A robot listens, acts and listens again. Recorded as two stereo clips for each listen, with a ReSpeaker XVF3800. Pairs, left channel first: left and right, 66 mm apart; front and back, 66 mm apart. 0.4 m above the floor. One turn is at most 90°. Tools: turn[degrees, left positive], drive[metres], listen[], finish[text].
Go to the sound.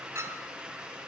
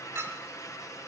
Thought: The clink: 135° right.
Action: turn[-90]
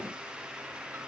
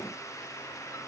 Thought: Nothing new. It was at 45° right.
Action: turn[-45]
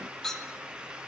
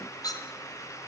Action: drive[1.0]
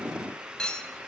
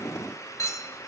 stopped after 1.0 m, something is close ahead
Thought: The clink is now 15° left.
Action: turn[15]
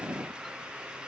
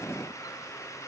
Action: listen[]
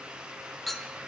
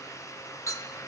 Action: finish[I am next to the clink.]